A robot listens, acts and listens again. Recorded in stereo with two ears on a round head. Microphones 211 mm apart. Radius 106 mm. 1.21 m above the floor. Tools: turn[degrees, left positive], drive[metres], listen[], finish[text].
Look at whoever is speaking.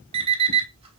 Action: listen[]
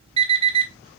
Action: listen[]
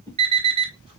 Action: finish[I can't make out anyone speaking to turn to.]